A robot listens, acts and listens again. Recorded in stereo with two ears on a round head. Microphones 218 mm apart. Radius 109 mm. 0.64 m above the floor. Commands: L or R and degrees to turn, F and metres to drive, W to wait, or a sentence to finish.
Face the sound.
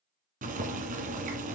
R35
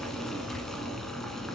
Facing the boiling, 1 to 2 m away.